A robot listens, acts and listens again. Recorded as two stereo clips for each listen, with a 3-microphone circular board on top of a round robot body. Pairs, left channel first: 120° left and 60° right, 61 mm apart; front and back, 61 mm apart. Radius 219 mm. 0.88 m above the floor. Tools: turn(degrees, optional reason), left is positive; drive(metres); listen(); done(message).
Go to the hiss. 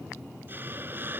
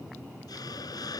drive(metres=1.0)
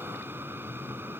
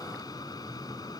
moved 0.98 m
drive(metres=1.0)
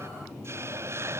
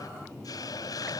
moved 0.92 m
turn(degrees=-15, reason="The hiss is now 15° right.")
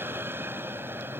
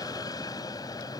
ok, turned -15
drive(metres=1.0)
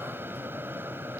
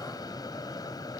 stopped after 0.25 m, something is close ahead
done("Arrived at the hiss, straight ahead.")